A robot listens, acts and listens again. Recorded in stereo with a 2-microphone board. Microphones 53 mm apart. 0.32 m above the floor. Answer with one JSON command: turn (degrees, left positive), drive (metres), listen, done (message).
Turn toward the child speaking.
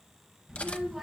{"turn": -30}
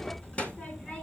{"turn": 25}
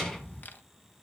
{"turn": 10}
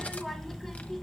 {"turn": 10}
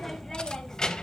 {"turn": 15}
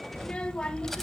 {"turn": 15}
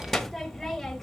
{"done": "Facing the child speaking, 1 to 2 m away."}